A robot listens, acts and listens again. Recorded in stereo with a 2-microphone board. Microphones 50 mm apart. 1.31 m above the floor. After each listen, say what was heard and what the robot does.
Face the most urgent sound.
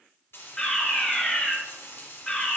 The fire alarm: about 15° left or 165° left. Turn 15° left.
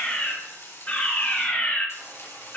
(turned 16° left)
So it is at 150° left. Turn 150° left.
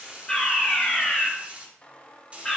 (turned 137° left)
The fire alarm is now 10° left. Turn 10° left.
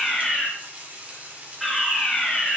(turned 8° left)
Facing the fire alarm, 2 to 4 m away.